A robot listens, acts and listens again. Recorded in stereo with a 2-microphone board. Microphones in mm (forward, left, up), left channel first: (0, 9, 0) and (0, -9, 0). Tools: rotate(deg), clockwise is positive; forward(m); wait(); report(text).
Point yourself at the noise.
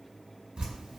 rotate(60)
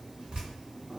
rotate(60)
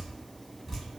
report("Facing the dripping.")